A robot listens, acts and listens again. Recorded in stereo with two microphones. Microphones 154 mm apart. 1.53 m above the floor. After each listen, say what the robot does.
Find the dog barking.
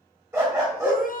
Turn 15° right.
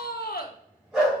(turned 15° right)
Facing the dog barking.